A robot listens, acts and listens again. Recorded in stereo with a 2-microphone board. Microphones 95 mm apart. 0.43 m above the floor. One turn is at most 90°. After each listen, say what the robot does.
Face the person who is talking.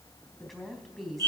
Turn 30° left.
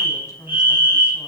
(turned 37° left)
Turn 90° left.
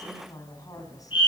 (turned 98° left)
Turn 45° left.
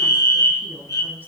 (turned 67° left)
Turn 25° right.
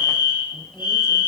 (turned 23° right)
Keep listening.
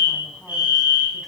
Keep listening.
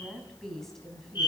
Facing the woman speaking, 2 to 4 m away.